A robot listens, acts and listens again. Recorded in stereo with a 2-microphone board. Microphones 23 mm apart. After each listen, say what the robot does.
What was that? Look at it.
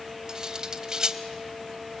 Turn 30° right.
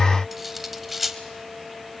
Turn 10° right.
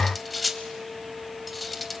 Found it: cutlery clinking, straight ahead, 1 to 2 m away.